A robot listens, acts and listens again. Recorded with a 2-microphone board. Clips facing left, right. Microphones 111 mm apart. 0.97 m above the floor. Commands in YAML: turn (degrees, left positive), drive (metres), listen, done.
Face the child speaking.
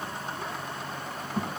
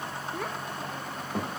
turn: -75
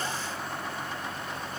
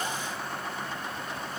listen: true
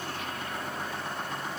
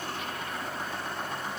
listen: true
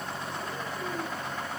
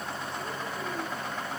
done: "I heard a child speaking, but can't make it out now. It was about straight ahead or 30° right."